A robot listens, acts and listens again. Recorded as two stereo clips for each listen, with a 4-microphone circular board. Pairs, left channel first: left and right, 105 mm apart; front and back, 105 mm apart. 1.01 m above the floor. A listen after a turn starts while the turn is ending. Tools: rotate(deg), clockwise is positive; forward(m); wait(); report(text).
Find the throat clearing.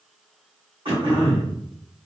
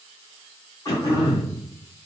rotate(55)
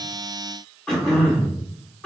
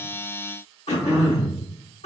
rotate(-10)
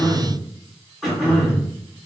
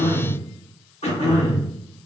report("Found it: throat clearing, straight ahead.")